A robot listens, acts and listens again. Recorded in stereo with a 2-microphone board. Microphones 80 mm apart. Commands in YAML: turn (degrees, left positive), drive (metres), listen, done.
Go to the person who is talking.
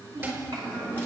turn: -70
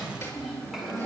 drive: 1.0
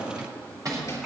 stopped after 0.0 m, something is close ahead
listen: true
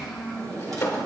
done: "Something is in my way. I am facing the child speaking but have not reached it."